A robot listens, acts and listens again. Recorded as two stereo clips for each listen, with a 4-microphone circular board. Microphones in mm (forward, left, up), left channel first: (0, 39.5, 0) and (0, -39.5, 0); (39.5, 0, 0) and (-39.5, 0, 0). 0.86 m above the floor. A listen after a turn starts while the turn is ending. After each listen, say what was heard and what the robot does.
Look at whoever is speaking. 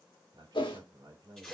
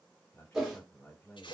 The man speaking: 65° right. Turn 65° right.
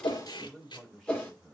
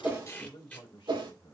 Facing the man speaking.